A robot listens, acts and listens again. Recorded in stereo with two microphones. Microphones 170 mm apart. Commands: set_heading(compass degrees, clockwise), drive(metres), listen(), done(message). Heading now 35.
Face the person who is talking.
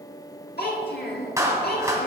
set_heading(305)
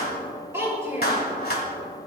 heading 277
set_heading(292)
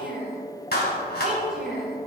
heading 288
done("Found it: a child speaking, straight ahead, over 4 m away.")